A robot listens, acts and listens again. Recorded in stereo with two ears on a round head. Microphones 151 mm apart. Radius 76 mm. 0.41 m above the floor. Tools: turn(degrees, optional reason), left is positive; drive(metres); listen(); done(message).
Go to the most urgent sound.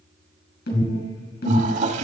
turn(degrees=70, reason="The alarm: about 70° left or 110° left.")
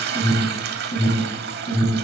turn(degrees=40, reason="So it is at 40° left.")
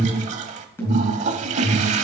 turn(degrees=15, reason="The alarm is now 15° left.")
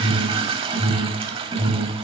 drive(metres=1.0)
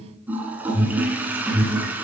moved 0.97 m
drive(metres=1.0)
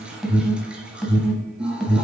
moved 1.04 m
drive(metres=1.0)
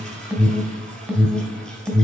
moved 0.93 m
drive(metres=1.0)
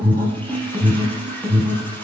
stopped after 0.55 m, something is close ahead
turn(degrees=-15, reason="The alarm is now 15° right.")
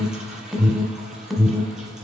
done("I am next to the alarm.")